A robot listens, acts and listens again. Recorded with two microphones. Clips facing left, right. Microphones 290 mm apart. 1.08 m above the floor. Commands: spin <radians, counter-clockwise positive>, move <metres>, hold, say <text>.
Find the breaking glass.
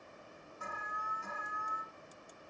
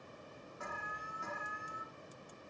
hold
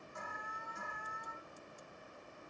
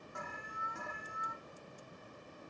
hold
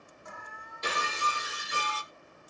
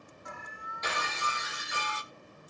spin 0.61
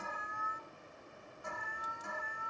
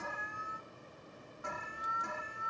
hold
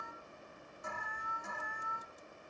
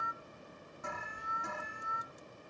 say I heard breaking glass, but can't make it out now. It was about straight ahead or 110° left.